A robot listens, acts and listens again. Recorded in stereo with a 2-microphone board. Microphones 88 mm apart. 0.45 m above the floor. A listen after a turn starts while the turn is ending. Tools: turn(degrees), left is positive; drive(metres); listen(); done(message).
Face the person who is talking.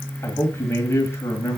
turn(degrees=30)
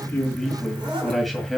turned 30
done("Found it: a man speaking, straight ahead.")